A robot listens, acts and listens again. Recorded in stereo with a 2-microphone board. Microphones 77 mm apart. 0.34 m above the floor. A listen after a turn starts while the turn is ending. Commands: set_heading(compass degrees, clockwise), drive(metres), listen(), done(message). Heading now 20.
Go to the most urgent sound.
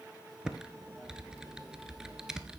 listen()
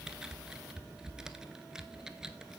listen()
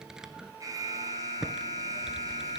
set_heading(70)
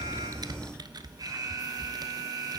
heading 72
set_heading(137)
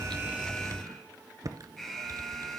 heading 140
drive(1.0)
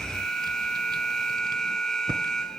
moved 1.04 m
set_heading(130)
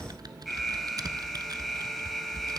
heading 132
drive(1.0)
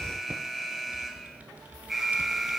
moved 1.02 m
drive(1.0)
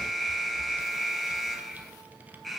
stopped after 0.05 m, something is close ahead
done("Arrived at the alarm, straight ahead.")